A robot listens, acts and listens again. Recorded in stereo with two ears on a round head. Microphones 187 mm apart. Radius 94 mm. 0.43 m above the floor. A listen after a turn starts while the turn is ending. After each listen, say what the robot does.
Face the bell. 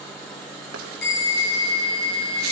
Turn 50° left.
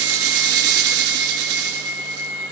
Turn 80° left.
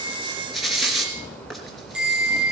Facing the bell, over 4 m away.